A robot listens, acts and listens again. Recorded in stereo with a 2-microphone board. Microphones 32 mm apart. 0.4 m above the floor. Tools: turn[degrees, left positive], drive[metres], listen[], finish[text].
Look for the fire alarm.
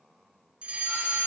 Thought: The fire alarm: about 35° right or 145° right.
Action: turn[-35]
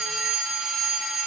Thought: So it is at 10° right.
Action: turn[-10]
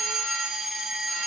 Action: finish[Facing the fire alarm.]